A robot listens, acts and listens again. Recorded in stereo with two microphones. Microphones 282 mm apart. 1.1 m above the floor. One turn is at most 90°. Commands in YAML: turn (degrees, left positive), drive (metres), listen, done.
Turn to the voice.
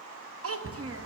turn: -50
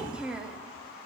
done: "Facing the child speaking."